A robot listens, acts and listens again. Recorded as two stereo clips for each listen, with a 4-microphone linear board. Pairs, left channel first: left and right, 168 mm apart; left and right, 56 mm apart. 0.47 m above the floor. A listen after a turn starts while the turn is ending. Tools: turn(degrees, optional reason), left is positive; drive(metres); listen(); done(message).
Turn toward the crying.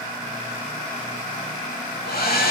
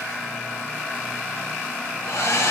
listen()
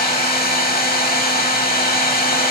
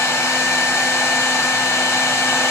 listen()
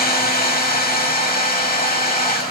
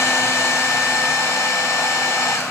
done("I can't make out crying, only a hair dryer.")